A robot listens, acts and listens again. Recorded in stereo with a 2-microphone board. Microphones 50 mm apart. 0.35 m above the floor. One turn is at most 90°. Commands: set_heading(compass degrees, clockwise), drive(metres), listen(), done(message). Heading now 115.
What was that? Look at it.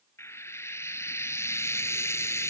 set_heading(50)
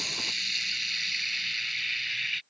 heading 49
done("Facing the frying.")